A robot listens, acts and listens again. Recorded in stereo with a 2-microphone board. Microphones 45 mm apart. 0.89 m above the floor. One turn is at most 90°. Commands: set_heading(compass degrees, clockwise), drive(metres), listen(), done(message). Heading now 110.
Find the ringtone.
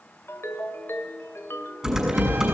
set_heading(40)
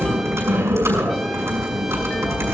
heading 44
listen()
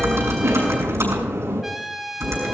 listen()
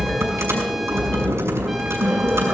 done("I heard a ringtone, but can't make it out now. It was about 5° left or 45° left.")